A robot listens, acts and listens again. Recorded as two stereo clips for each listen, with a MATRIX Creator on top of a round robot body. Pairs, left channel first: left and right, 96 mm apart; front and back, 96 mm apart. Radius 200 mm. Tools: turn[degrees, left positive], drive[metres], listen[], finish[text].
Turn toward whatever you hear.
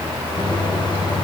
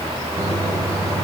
Thought: The microwave: 125° left.
Action: turn[125]
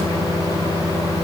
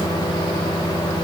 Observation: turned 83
Thought: The microwave is now 40° left.
Action: turn[40]
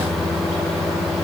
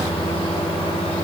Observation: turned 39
Action: finish[Facing the microwave, 1 to 2 m away.]